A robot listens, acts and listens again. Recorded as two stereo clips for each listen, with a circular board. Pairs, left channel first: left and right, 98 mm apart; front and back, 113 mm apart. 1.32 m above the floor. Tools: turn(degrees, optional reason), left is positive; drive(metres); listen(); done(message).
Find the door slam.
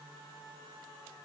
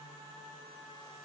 listen()
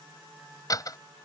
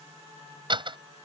turn(degrees=140, reason="The door slam: 140° left.")
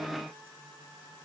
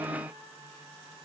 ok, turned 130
turn(degrees=10, reason="Nothing new. It was at 10° left.")
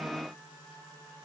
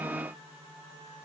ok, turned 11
done("Facing where the door slam came from. I can't hear it now.")